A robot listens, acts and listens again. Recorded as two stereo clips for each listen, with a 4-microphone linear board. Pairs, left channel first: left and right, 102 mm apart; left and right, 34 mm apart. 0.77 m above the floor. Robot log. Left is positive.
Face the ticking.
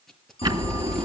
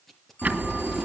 note: The ticking: about 45° right or 135° right.
cmd yaw -45
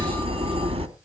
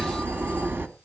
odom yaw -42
note: So it is at 90° right.
cmd yaw -90
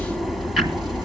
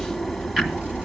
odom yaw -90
end: Found it: ticking, straight ahead.